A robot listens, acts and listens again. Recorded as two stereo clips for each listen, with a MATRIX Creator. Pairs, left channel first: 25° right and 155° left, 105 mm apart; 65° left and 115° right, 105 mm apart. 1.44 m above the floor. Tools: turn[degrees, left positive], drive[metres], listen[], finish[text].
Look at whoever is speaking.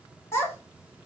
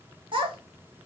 Thought: The child speaking: 85° right.
Action: turn[-85]
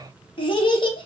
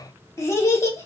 Thought: The child speaking is now 10° left.
Action: turn[10]
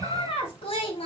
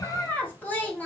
Action: finish[Facing the child speaking, 1 to 2 m away.]